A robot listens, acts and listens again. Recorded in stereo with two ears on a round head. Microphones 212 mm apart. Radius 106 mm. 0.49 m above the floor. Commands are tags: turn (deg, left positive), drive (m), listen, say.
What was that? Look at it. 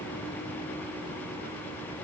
<listen/>
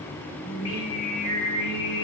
<turn deg="50"/>
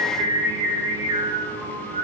<turn deg="-35"/>
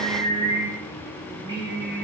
<turn deg="-20"/>
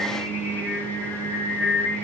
<say>Facing the singing, 1 to 2 m away.</say>